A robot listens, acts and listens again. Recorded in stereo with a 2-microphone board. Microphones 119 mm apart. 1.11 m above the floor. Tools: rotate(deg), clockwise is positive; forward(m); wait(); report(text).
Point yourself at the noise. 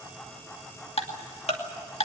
rotate(-60)
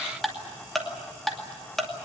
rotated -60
report("Found it: ticking, straight ahead, 2 to 4 m away.")